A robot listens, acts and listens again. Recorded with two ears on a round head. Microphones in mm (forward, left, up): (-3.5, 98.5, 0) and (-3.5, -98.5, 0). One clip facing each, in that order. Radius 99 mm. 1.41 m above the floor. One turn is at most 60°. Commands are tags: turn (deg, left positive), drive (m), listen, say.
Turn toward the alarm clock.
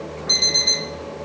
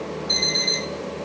<turn deg="45"/>
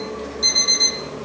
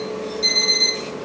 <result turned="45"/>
<turn deg="10"/>
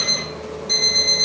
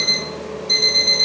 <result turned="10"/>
<say>Found it: an alarm clock, straight ahead.</say>